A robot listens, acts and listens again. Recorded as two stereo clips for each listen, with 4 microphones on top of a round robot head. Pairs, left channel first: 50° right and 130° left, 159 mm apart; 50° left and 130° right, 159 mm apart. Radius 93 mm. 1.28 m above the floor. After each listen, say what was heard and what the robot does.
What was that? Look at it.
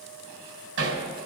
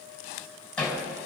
The hammering: 135° left. Turn 135° left.
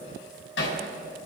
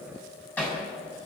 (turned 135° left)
The hammering is now 30° right. Turn 30° right.
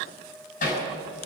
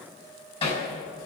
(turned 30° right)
The hammering is now 10° right. Turn 10° right.
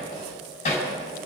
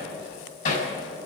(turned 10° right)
Found it: hammering, straight ahead, 2 to 4 m away.